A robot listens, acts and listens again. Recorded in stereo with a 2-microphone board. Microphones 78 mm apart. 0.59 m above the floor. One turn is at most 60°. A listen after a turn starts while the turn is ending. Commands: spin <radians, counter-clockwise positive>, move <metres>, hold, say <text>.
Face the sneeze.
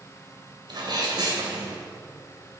spin -1.05
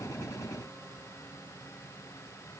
hold
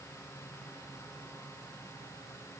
say I heard a sneeze, but can't make it out now. It was about 10° right or 50° right.